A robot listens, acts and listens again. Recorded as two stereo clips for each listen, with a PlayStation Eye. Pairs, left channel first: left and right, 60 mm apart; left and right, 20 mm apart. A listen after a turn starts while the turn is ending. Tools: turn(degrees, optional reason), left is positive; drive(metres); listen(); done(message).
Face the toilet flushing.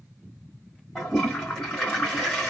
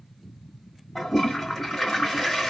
turn(degrees=30)
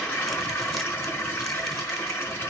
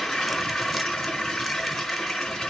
turn(degrees=140, reason="So it is at 140° left.")
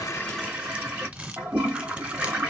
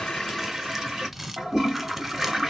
turn(degrees=-20, reason="The toilet flushing is now 20° right.")
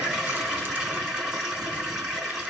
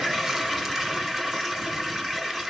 turn(degrees=-10, reason="The toilet flushing is now 10° right.")
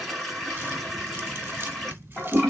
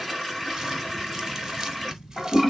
done("Facing the toilet flushing.")